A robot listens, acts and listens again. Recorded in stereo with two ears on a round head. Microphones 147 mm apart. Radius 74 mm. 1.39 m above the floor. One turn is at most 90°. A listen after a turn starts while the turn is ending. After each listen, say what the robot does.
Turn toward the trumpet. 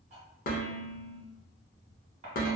Keep listening.
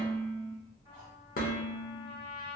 Turn 60° right.
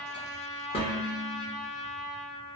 Turn 10° right.
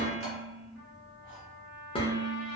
Found it: a trumpet, straight ahead, 2 to 4 m away.